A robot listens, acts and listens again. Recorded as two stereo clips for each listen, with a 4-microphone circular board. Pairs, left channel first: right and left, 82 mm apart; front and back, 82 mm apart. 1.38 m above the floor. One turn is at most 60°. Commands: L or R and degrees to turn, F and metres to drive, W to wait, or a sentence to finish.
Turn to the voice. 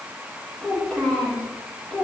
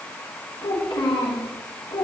R15
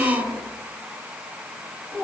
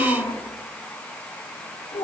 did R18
Found it: a child speaking, straight ahead.